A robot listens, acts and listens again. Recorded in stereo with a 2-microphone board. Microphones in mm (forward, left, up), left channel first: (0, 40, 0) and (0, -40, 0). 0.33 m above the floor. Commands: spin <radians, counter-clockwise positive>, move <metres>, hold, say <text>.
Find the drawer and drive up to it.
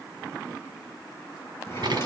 spin 0.61
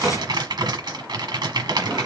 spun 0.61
move 1.0
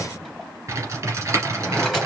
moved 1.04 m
move 1.0
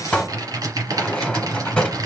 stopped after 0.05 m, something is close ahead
spin 0.26
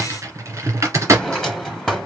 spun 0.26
say I am next to the drawer.